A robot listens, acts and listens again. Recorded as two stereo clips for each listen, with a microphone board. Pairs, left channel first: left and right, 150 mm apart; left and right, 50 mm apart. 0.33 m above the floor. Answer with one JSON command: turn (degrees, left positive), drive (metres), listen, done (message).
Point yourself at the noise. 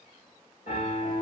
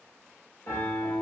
{"turn": 65}
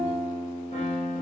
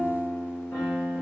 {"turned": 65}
{"turn": 50}
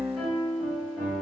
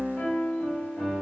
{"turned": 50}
{"done": "Facing the piano, 1 to 2 m away."}